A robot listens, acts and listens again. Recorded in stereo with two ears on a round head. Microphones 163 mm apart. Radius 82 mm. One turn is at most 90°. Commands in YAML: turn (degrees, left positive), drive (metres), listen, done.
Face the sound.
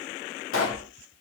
turn: 90
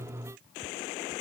done: "Facing where the pop came from. I can't hear it now."